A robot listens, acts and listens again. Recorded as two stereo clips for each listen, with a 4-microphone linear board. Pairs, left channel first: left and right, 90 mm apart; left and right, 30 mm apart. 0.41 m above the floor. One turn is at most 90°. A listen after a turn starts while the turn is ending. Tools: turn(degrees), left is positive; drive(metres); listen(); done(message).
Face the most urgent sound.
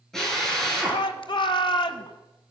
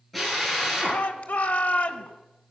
turn(degrees=55)
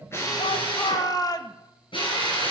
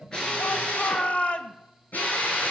turn(degrees=50)
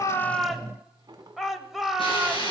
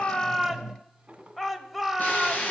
done("Facing the shout, 1 to 2 m away.")